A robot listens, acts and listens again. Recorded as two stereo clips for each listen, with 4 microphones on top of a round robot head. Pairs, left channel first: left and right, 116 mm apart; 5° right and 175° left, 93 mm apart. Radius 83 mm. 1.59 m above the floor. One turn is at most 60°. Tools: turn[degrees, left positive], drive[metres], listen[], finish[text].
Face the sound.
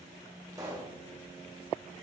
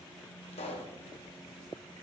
Thought: The pop: 20° right.
Action: turn[-20]
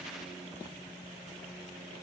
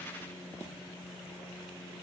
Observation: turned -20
Action: finish[Facing where the pop came from. I can't hear it now.]